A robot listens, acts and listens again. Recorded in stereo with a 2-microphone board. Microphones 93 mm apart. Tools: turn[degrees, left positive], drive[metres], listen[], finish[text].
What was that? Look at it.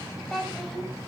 Action: turn[30]
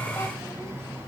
Action: listen[]
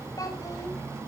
Action: listen[]
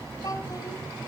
Thought: So it is at 135° left.
Action: turn[135]
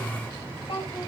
Thought: The child speaking is now 55° left.
Action: turn[55]
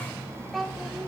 Action: finish[Facing the child speaking, 2 to 4 m away.]